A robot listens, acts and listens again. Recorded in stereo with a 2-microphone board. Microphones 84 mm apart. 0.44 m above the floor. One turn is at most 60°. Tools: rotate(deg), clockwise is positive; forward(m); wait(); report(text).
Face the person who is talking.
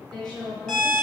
rotate(-30)
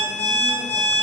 wait()
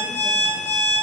wait()
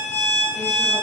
report("I heard a woman speaking, but can't make it out now. It was about 20° right or 140° left.")